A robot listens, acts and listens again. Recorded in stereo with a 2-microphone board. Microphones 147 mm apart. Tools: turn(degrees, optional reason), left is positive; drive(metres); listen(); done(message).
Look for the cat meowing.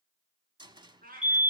turn(degrees=-90)
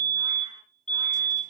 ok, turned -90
listen()
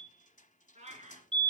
turn(degrees=-50, reason="The cat meowing is now 50° right.")
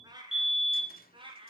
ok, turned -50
turn(degrees=-35, reason="The cat meowing is now 35° right.")
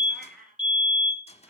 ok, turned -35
done("Facing the cat meowing, 2 to 4 m away.")